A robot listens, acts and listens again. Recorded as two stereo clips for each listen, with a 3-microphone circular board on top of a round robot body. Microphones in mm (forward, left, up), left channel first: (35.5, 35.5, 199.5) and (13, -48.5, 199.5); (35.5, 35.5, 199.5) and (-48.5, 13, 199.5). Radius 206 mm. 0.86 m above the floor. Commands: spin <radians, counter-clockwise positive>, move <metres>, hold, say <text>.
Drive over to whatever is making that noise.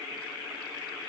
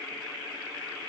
hold
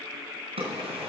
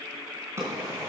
spin -1.83
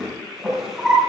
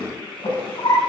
spin -0.35
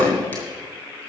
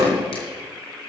move 1.0
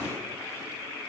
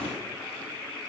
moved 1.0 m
hold
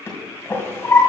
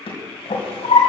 spin 0.17
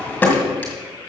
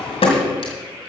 move 1.0
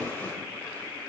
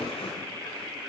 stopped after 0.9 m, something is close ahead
hold
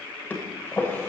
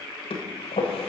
say Arrived at the drawer, straight ahead.